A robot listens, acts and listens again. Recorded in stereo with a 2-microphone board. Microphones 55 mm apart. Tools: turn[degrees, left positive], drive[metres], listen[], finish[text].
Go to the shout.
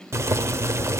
Action: listen[]
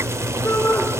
Thought: The shout: about 50° left or 130° left.
Action: turn[50]
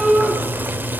Action: drive[1.0]
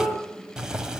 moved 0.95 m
Action: drive[1.0]
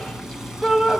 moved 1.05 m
Action: drive[1.0]
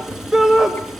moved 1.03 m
Thought: The shout is now 15° right.
Action: turn[-15]
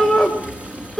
Action: drive[1.0]
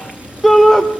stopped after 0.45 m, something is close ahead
Action: finish[Arrived at the shout, straight ahead.]